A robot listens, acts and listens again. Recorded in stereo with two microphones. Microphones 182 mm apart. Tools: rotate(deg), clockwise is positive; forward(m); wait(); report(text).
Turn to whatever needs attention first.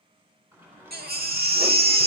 rotate(60)
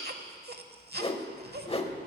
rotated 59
rotate(65)
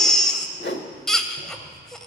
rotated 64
report("Found it: a baby crying, straight ahead, under 1 m away.")